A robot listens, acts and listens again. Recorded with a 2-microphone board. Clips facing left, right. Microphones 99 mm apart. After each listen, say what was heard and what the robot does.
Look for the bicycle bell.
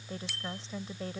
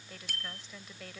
The bicycle bell: about 45° right or 135° right. Turn 45° right.
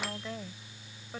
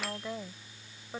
Keep listening.
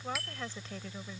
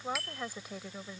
Found it: a bicycle bell, straight ahead.